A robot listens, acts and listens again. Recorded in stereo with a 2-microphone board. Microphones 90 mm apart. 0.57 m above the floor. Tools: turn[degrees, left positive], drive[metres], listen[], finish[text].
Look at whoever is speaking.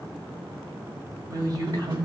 Thought: The woman speaking: about 50° right or 130° right.
Action: turn[-50]
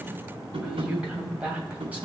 Thought: So it is at 15° right.
Action: turn[-15]
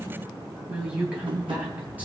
Thought: The woman speaking is now 15° right.
Action: turn[-15]
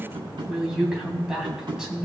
Action: finish[Found it: a woman speaking, straight ahead, 2 to 4 m away.]